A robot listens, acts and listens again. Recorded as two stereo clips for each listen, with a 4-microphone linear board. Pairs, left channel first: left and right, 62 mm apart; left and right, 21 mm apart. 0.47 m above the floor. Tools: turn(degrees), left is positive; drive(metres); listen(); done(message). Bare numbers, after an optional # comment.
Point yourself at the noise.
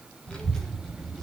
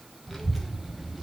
turn(30)
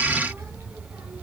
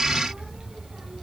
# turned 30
# So it is at 50° right.
turn(-50)
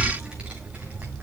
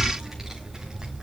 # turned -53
# The child speaking is now 25° right.
turn(-25)
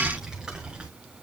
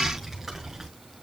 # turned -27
# The child speaking is now 15° right.
turn(-15)
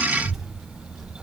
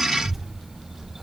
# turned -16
# The child speaking is now 10° right.
turn(-10)
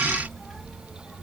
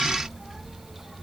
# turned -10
done("Found it: a child speaking, straight ahead, 2 to 4 m away.")